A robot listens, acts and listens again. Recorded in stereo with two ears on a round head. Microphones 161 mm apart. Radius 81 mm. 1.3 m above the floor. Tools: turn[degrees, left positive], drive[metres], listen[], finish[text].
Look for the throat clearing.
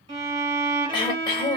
Thought: The throat clearing: about 25° left or 155° left.
Action: turn[25]
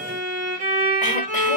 Action: listen[]
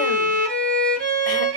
Action: listen[]
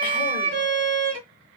Action: finish[I heard throat clearing, but can't make it out now. It was about straight ahead or 130° left.]